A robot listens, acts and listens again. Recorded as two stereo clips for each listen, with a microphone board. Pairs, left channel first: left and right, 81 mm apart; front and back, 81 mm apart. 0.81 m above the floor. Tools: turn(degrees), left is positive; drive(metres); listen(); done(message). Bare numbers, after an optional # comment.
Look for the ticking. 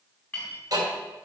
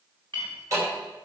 # The ticking: 130° right.
turn(-130)
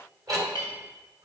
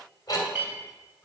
# The ticking is now 45° right.
turn(-45)
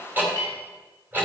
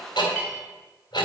# The ticking is now 20° right.
turn(-20)
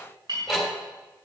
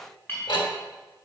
done("Facing the ticking, 2 to 4 m away.")